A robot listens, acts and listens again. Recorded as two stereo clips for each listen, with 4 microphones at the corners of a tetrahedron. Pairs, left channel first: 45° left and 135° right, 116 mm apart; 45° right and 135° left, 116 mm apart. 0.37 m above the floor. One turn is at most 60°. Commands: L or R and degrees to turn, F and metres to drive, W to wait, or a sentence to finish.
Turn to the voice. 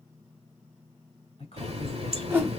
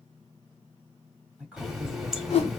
L55
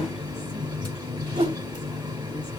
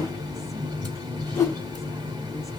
W
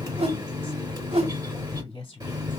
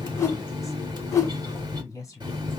L10
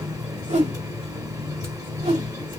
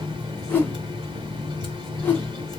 W
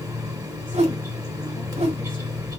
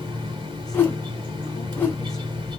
W
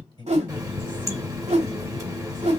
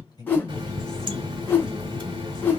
Found it: a woman speaking, straight ahead, 1 to 2 m away.